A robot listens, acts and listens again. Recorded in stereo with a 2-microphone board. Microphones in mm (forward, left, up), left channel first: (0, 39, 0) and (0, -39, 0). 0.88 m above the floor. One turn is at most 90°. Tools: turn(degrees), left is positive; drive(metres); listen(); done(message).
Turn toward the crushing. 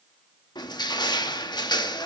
turn(degrees=70)
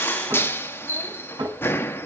turn(degrees=30)
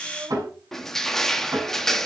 done("Found it: crushing, straight ahead.")